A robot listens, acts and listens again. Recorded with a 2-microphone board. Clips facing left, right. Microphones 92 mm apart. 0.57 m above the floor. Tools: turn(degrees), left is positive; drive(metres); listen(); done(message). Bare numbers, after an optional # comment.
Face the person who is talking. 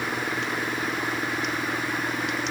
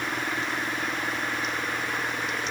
listen()
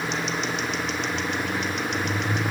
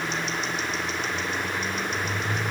listen()
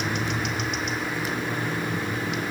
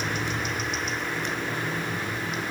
done("I can't make out anyone speaking to turn to.")